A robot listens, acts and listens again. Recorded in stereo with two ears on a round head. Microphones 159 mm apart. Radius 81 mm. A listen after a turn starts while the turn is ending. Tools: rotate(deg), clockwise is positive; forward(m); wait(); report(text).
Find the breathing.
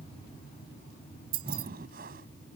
rotate(60)
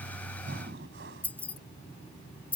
rotate(65)
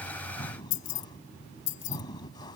rotate(-25)
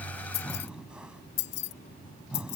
report("Found it: breathing, straight ahead.")